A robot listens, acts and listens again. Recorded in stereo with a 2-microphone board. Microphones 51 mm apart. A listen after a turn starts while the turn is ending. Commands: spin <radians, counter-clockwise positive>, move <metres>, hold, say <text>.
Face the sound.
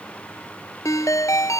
spin 1.57
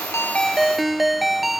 say Found it: a ringtone, straight ahead.